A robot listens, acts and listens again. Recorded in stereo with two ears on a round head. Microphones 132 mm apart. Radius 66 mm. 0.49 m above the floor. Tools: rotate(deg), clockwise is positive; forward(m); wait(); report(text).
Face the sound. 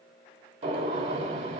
rotate(50)
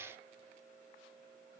wait()
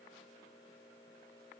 report("I heard a gunshot, but can't make it out now. It was about straight ahead or 80° right.")